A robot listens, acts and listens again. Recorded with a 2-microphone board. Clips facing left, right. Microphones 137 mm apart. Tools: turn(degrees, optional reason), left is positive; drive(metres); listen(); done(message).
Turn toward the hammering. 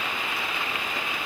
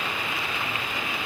listen()
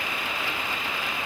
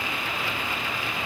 listen()
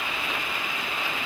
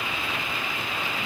done("I can't make out hammering.")